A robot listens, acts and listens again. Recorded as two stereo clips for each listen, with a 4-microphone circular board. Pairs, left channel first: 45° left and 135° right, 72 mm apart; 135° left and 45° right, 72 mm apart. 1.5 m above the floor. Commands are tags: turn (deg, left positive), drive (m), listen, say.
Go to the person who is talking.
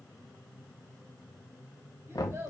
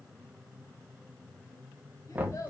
<turn deg="170"/>
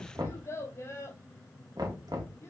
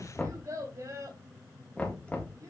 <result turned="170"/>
<drive m="1.0"/>
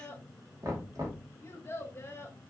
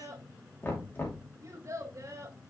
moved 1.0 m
<drive m="1.0"/>
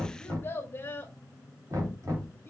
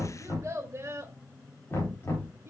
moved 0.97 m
<drive m="1.0"/>
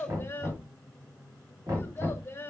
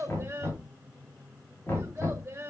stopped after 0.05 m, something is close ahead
<say>Arrived at the child speaking, straight ahead.</say>